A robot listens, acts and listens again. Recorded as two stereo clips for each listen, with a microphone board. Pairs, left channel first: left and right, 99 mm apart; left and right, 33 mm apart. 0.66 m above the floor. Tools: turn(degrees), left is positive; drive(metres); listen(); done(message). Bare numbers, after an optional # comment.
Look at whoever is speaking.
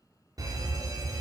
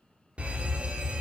listen()
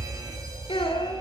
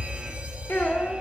# The child speaking: about 70° left or 110° left.
turn(70)
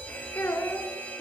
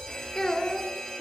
# So it is at 25° left.
turn(25)
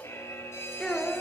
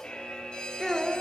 done("Facing the child speaking, 2 to 4 m away.")